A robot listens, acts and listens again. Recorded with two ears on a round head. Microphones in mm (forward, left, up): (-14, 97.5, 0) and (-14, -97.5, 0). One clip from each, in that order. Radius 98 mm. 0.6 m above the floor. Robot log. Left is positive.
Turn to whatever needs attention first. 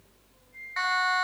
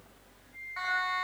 note: The siren: about 60° left or 120° left.
cmd yaw +60
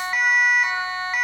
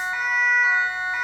note: So it is at 60° left.
cmd yaw +60
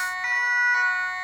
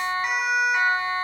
end: Found it: a siren, straight ahead.